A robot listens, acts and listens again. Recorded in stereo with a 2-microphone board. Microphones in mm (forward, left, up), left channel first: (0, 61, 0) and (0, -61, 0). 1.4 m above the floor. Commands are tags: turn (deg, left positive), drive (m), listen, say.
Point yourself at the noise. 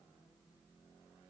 <listen/>
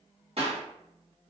<turn deg="-55"/>
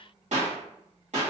<turn deg="-70"/>
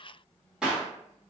<say>Facing the clap.</say>